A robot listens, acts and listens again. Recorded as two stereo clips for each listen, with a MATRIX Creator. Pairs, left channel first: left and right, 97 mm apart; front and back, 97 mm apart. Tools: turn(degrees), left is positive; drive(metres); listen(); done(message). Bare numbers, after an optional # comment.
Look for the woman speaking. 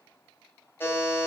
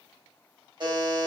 listen()
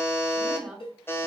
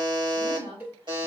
# The woman speaking: 175° right.
turn(-175)
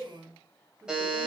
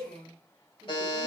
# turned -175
done("Facing the woman speaking.")